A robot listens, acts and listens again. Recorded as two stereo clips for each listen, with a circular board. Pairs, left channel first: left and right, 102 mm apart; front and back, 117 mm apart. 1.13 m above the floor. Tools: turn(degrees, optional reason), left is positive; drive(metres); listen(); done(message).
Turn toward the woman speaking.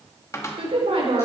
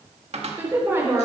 turn(degrees=-110, reason="The woman speaking: 110° right.")
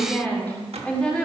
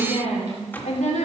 turn(degrees=10, reason="The woman speaking is now 10° left.")
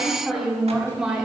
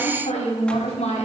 done("Found it: a woman speaking, straight ahead, 2 to 4 m away.")